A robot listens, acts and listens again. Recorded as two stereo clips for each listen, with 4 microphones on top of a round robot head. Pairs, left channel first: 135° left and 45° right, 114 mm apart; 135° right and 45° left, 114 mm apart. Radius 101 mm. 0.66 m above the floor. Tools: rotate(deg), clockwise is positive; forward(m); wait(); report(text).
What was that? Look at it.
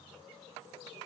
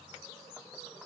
wait()
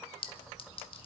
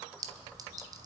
rotate(-100)
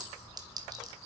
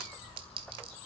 rotate(-10)
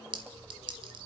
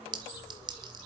report("Facing the clink, 1 to 2 m away.")